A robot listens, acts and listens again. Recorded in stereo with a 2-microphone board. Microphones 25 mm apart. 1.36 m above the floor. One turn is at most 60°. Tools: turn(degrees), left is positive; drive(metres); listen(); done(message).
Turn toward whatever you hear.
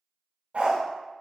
turn(degrees=-60)
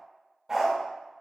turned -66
turn(degrees=-15)
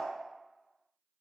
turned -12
listen()
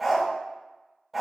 done("Found it: a dog barking, straight ahead, 2 to 4 m away.")